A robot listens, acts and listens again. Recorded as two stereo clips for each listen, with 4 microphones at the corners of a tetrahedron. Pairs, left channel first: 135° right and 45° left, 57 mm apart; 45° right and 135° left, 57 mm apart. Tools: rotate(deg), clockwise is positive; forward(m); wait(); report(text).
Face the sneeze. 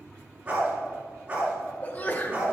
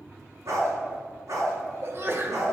rotate(-170)
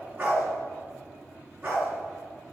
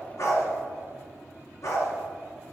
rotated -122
rotate(-50)
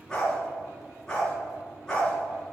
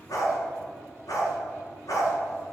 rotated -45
report("I heard a sneeze from this way, but can't make it out now.")